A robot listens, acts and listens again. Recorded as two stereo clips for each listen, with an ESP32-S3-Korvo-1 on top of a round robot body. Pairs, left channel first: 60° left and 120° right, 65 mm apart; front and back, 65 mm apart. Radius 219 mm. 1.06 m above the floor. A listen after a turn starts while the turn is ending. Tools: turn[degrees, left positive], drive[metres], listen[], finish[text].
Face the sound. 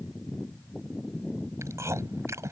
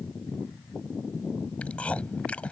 Thought: The chewing: 70° right.
Action: turn[-70]
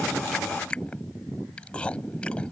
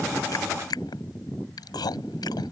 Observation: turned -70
Thought: The chewing is now 15° right.
Action: turn[-15]
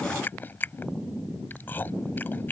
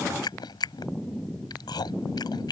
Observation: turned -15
Action: finish[Facing the chewing.]